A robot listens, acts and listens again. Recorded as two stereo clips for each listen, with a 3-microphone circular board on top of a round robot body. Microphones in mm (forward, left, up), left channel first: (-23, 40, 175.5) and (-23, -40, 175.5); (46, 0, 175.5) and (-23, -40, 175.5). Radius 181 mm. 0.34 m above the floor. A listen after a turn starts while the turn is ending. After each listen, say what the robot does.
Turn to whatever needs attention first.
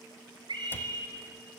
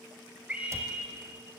Turn 75° right.
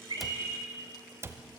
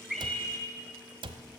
Turn 25° right.
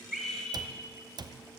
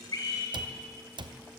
Found it: a scream, straight ahead.